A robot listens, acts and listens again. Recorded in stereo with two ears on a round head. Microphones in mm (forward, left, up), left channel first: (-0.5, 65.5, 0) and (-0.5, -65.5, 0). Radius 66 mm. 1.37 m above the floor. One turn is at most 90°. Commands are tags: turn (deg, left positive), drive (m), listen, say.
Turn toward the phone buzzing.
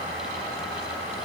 <listen/>
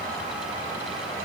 <listen/>
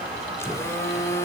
<turn deg="20"/>
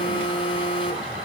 <turn deg="90"/>
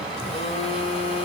<turn deg="45"/>
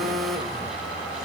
<say>Facing the phone buzzing, 2 to 4 m away.</say>